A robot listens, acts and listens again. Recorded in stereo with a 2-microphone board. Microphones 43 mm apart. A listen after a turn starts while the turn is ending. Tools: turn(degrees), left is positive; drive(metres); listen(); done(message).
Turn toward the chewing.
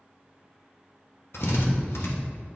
listen()
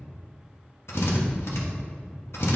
listen()
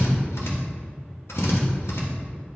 done("I can't make out chewing, only a drill.")